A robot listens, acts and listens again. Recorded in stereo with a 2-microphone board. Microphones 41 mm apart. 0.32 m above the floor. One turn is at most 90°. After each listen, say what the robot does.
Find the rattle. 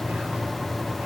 Keep listening.
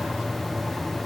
Keep listening.
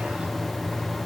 I can't make out a rattle.